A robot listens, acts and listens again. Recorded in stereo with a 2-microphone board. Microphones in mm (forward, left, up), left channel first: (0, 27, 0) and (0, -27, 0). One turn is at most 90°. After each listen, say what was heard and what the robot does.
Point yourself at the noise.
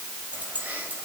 The keys jangling: about 35° right or 145° right. Turn 35° right.
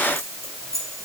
So it is at 110° right. Turn 90° right.
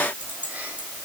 The keys jangling is now 25° right. Turn 25° right.
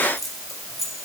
Facing the keys jangling, over 4 m away.